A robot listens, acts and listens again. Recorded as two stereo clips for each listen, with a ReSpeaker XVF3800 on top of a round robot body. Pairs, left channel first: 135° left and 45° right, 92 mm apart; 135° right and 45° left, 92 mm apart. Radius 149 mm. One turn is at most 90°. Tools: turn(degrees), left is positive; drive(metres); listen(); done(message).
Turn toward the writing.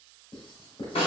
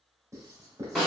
turn(degrees=90)
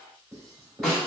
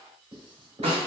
turn(degrees=15)
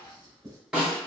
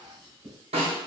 done("Facing the writing.")